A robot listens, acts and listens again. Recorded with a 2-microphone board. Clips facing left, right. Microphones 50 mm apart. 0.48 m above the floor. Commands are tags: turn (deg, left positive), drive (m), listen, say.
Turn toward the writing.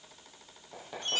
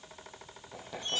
<turn deg="30"/>
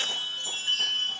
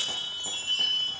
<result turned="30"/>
<listen/>
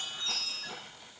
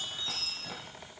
<turn deg="-20"/>
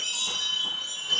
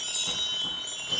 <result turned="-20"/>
<listen/>
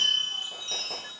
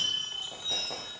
<listen/>
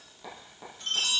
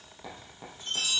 <say>Facing the writing.</say>